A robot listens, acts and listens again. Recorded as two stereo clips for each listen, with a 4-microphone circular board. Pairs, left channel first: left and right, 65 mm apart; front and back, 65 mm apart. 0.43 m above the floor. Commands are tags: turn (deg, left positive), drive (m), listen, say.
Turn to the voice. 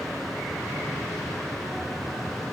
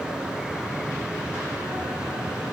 <listen/>
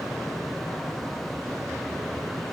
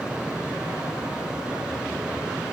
<listen/>
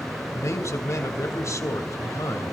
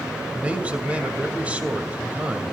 <turn deg="115"/>
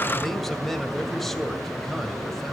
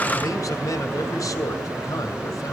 <say>Facing the man speaking.</say>